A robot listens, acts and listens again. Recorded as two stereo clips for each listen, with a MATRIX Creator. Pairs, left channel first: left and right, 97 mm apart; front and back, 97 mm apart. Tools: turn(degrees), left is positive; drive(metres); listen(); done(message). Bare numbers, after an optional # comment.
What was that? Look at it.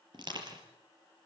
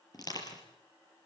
# The crushing: 50° right.
turn(-50)
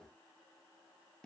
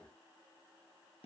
listen()
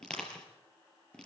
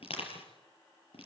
# The crushing is now 10° left.
turn(10)
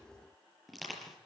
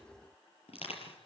done("Facing the crushing, over 4 m away.")